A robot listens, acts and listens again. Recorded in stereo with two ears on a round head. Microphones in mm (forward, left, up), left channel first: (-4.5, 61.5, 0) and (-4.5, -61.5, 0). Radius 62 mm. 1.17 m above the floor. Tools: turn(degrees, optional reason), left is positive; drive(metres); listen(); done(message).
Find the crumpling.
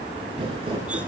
turn(degrees=-40, reason="The crumpling: about 40° right or 140° right.")
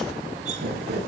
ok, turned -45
turn(degrees=-95, reason="So it is at 95° right.")
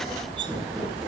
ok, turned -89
listen()
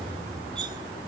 listen()
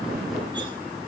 done("Facing where the crumpling came from. I can't hear it now.")